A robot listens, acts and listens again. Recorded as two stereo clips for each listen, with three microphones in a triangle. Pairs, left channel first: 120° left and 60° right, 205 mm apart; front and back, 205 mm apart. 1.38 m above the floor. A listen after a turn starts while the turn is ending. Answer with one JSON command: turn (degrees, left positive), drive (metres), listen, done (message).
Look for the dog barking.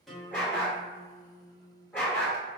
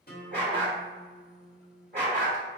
{"turn": -160}
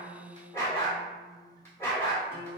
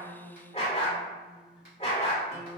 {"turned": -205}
{"turn": 45}
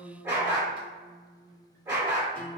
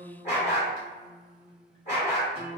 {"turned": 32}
{"turn": 10}
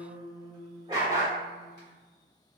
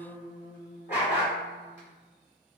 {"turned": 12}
{"done": "Found it: a dog barking, straight ahead."}